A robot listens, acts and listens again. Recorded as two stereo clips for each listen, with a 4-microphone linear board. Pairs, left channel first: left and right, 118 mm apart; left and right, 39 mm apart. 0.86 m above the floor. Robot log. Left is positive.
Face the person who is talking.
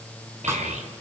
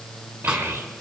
cmd yaw -90
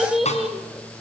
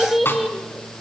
end: Found it: a child speaking, straight ahead, 2 to 4 m away.